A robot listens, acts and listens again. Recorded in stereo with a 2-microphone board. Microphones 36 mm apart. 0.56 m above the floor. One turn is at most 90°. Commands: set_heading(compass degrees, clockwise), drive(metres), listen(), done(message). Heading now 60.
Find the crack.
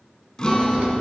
set_heading(100)
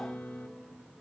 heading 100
listen()
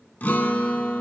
done("I heard a crack, but can't make it out now. It was about straight ahead or 100° right.")